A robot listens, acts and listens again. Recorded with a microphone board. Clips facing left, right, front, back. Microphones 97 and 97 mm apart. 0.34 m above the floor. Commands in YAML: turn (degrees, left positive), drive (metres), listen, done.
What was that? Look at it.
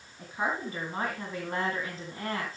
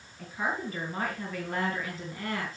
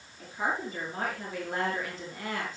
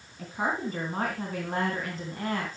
turn: 140
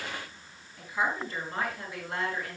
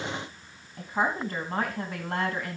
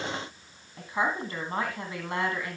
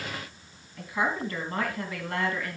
turn: -70
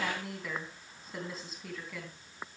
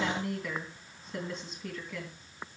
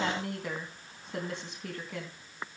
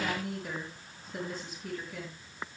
done: "Facing the woman speaking."